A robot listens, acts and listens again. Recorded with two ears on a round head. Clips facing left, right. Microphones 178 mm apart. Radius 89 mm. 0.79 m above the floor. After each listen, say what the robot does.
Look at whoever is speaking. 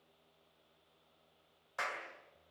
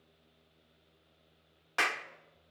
Keep listening.
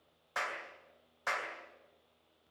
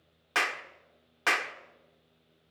Keep listening.
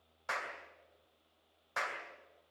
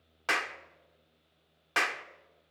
I can't make out anyone speaking to turn to.